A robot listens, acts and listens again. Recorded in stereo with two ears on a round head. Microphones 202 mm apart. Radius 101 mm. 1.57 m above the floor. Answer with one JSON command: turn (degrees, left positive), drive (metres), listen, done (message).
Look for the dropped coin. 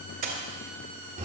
{"turn": -40}
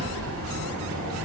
{"listen": true}
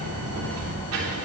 {"done": "I heard a dropped coin, but can't make it out now. It was about straight ahead or 100° right."}